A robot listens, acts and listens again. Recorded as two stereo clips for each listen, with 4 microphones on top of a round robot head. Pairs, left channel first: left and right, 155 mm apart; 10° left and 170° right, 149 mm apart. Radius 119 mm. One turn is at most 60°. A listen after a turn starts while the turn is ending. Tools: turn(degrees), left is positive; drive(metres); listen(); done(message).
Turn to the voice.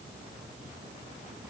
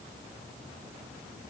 listen()
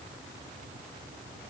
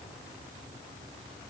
listen()
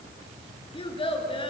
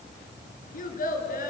turn(degrees=35)
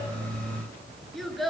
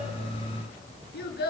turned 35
done("Found it: a child speaking, straight ahead.")